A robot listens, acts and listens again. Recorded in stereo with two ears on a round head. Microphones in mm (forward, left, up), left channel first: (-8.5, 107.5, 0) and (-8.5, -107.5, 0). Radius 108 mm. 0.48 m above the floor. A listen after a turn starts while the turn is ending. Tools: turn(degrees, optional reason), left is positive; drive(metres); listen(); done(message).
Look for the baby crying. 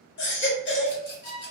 turn(degrees=50, reason="The baby crying: about 50° left or 130° left.")
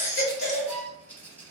turn(degrees=75, reason="So it is at 75° left.")
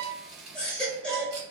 done("Facing the baby crying.")